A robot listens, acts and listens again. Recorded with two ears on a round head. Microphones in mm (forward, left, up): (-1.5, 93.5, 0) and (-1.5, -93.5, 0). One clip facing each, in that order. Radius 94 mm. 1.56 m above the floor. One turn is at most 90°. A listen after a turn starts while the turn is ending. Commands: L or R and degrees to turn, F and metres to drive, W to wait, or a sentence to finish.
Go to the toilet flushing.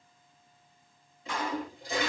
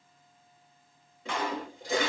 R60
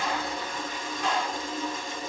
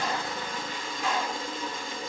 R60
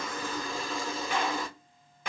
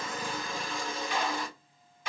F1.0
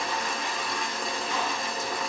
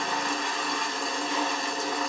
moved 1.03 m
F1.0
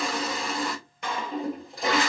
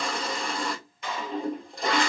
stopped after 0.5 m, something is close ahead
I am next to the toilet flushing.